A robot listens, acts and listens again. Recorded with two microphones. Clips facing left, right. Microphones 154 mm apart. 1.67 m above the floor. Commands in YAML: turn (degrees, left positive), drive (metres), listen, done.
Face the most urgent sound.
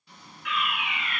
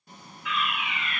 turn: 65
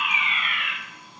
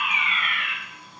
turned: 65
turn: 25
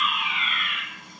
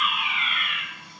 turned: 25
done: "Facing the fire alarm."